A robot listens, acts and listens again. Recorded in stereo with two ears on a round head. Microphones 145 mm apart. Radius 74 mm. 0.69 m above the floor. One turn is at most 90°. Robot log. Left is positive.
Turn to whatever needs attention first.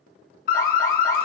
note: The alarm: about 60° left or 120° left.
cmd yaw +60
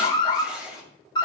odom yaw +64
note: So it is at 30° left.
cmd yaw +30
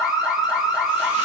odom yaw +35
end: Facing the alarm, 1 to 2 m away.